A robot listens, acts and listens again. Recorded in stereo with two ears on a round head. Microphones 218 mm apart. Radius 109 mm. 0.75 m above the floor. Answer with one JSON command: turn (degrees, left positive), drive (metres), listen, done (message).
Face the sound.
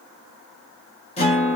{"turn": 25}
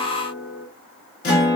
{"turn": 125}
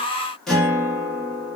{"done": "Found it: a guitar, straight ahead."}